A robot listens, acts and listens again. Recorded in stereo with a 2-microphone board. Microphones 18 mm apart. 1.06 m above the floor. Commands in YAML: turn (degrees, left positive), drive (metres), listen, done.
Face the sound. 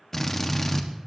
turn: 25
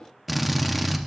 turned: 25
done: "Facing the drill, 1 to 2 m away."